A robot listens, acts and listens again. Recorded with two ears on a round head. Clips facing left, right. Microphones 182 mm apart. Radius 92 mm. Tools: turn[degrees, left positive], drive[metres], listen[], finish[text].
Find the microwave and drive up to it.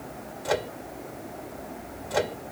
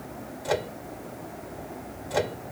Action: turn[30]
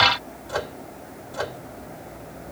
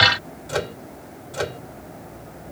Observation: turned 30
Thought: So it is at 30° right.
Action: turn[-30]
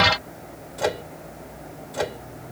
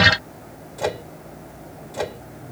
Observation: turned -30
Action: drive[1.0]
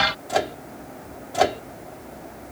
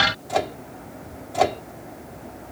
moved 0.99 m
Action: drive[1.0]
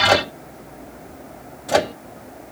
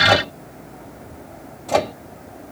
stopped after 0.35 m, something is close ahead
Thought: The microwave is now 10° left.
Action: turn[10]
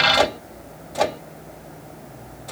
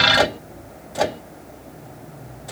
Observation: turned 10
Action: finish[Arrived at the microwave, straight ahead.]